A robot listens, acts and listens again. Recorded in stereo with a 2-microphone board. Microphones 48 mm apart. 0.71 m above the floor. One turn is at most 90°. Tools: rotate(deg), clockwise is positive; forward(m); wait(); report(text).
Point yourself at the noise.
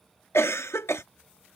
rotate(-60)
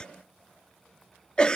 rotate(-20)
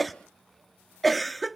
report("Facing the cough.")